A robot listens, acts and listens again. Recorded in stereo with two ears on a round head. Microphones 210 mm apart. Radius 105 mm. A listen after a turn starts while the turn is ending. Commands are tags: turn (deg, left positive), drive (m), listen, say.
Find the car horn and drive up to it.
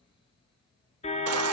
<turn deg="30"/>
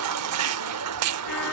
<listen/>
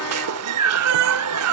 <listen/>
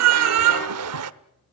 <say>I heard a car horn, but can't make it out now. It was about straight ahead or 120° left. I did not reach it.</say>